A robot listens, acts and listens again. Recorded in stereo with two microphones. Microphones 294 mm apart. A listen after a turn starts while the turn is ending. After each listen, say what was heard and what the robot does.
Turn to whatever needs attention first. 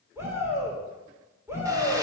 Turn 30° right.
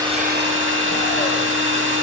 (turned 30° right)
Keep listening.
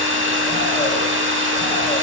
Keep listening.
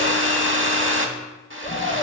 So it is at 20° left. Turn 20° left.
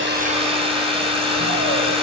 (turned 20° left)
Keep listening.
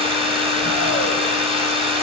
Keep listening.
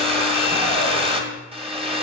I heard a shout from this way, but can't make it out now.